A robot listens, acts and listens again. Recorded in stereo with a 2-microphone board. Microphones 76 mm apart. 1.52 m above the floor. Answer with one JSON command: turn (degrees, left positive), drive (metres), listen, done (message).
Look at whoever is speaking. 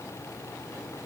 {"listen": true}
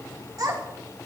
{"turn": -60}
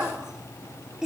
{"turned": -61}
{"turn": -10}
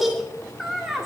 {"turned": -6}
{"done": "Found it: a child speaking, straight ahead."}